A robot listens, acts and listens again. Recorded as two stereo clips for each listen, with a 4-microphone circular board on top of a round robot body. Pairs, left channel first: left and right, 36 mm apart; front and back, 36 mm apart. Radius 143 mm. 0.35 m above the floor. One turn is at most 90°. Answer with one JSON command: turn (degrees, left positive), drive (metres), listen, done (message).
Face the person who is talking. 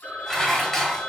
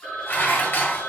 {"listen": true}
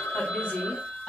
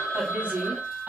{"turn": 90}
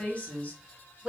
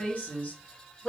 {"turn": 45}
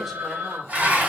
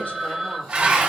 {"listen": true}
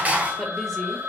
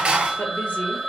{"listen": true}
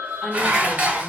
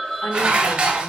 {"done": "Facing where the woman speaking came from. I can't hear it now."}